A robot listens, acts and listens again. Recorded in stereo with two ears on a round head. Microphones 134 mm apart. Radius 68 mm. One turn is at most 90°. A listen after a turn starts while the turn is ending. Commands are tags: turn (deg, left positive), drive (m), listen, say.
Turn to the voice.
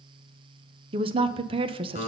<turn deg="-35"/>
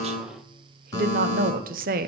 <turn deg="-90"/>
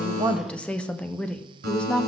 <turn deg="10"/>
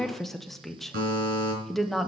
<say>Facing the woman speaking.</say>